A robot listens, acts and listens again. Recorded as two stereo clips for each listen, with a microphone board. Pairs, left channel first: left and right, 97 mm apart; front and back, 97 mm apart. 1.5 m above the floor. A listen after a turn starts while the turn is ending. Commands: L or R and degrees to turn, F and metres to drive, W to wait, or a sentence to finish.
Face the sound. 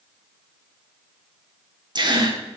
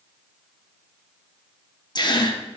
R45
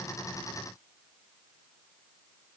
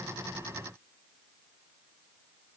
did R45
Facing where the gasp came from. I can't hear it now.